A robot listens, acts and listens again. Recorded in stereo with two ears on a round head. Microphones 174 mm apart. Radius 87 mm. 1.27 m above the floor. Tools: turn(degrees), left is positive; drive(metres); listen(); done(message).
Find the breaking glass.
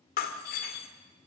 turn(degrees=50)
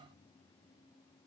listen()
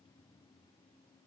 done("I heard breaking glass, but can't make it out now. It was about straight ahead or 80° left.")